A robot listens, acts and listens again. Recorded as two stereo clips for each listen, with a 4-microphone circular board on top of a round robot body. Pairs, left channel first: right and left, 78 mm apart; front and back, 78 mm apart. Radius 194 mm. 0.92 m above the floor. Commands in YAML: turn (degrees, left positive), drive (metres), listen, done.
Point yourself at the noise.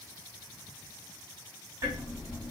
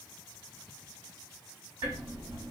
turn: 140
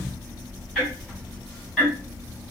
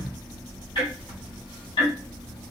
done: "Facing the ticking, 1 to 2 m away."